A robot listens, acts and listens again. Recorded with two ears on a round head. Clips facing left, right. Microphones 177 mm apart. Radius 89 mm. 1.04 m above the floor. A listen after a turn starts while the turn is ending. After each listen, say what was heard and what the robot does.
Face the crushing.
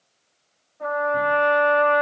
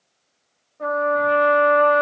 Keep listening.
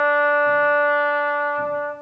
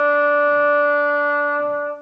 Keep listening.
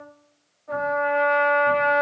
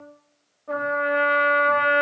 I can't make out crushing to turn to.